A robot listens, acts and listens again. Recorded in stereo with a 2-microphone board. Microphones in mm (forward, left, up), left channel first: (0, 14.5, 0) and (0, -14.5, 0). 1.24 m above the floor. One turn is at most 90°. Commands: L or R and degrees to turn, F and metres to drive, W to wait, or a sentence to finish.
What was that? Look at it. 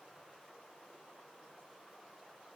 W
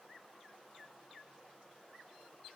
W
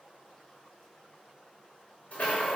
L55
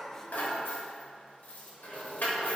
L70
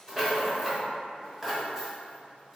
R20
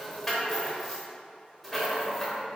Found it: a rattle, straight ahead.